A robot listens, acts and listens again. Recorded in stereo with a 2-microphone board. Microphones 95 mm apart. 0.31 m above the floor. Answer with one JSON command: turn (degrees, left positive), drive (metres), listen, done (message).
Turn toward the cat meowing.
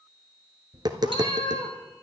{"turn": 60}
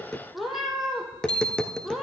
{"done": "Found it: a cat meowing, straight ahead, 1 to 2 m away."}